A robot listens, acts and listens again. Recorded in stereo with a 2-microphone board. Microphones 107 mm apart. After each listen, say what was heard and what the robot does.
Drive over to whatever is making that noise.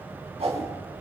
The whoosh: about 70° right or 110° right. Turn 70° right.
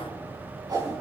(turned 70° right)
So it is at 40° right. Turn 40° right.
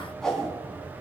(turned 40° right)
Drive 1.0 m forward.
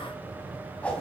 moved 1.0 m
The whoosh is now 15° left. Turn 15° left.
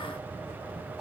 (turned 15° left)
Keep listening.
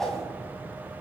Drive 1.0 m forward.
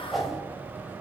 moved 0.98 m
Drive 1.0 m forward.
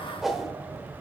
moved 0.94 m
Drive 1.0 m forward.
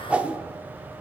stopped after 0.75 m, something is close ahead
The whoosh is now 15° right. Turn 15° right.
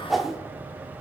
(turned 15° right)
Arrived at the whoosh, straight ahead.